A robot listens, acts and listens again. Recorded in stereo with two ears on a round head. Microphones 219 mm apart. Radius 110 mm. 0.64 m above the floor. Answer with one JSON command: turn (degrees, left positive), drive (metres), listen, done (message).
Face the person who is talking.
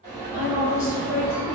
{"turn": 55}
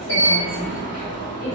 {"listen": true}
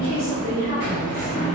{"turn": 45}
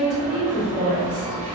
{"done": "Facing the woman speaking."}